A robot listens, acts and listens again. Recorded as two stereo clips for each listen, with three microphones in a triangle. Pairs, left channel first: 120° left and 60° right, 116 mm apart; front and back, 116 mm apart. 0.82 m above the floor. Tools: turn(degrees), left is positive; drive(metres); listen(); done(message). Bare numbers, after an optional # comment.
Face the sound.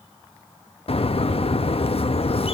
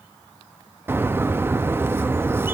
# The bird: 115° left.
turn(115)
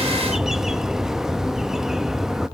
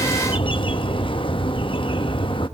# The bird is now 25° left.
turn(25)
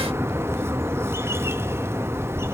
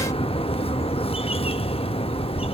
done("Found it: a bird, straight ahead, under 1 m away.")